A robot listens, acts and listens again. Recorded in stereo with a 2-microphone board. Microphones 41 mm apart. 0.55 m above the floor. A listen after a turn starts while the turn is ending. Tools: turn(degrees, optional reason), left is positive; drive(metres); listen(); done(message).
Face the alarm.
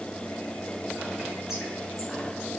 listen()
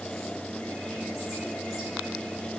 listen()
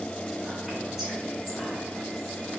done("I can't make out an alarm to turn to.")